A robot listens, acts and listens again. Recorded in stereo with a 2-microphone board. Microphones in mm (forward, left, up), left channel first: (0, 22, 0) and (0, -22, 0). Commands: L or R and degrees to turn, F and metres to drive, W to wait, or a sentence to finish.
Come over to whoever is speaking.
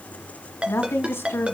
L65
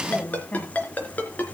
L35
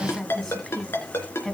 F1.0
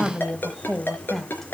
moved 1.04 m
F1.0
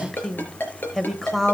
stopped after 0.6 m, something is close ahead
I am next to the woman speaking.